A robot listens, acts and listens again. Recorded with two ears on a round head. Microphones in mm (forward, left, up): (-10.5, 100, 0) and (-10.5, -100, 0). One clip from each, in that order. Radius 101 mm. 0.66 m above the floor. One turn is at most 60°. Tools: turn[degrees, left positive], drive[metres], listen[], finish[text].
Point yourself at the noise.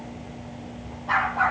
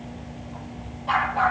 Thought: The dog barking: about 60° right or 120° right.
Action: turn[-60]
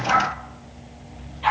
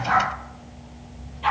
Thought: So it is at 10° left.
Action: turn[10]
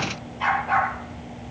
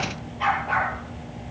Action: finish[Facing the dog barking, over 4 m away.]